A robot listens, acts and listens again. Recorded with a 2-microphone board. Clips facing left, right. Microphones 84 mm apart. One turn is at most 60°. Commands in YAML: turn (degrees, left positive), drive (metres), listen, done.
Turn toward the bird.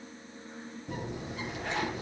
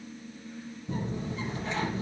turn: 60
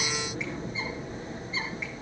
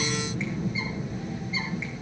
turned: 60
turn: 35
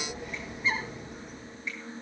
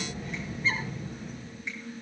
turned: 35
done: "Found it: a bird, straight ahead, over 4 m away."